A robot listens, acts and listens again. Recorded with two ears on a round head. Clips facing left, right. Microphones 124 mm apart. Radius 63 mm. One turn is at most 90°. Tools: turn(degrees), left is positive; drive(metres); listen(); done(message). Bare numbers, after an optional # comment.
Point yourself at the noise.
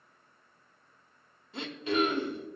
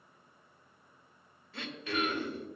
# The throat clearing: about 20° left or 160° left.
turn(20)
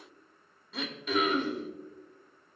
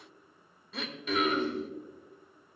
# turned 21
done("Found it: throat clearing, straight ahead.")